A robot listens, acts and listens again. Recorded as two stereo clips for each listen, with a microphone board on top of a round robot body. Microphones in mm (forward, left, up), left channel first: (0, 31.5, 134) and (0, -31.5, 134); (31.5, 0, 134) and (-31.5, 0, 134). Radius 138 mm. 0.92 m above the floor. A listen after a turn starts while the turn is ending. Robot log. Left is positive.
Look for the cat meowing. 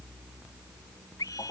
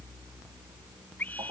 cmd idle
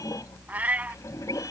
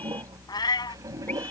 note: The cat meowing: 20° right.
cmd yaw -20
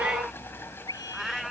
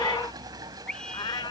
end: Facing the cat meowing.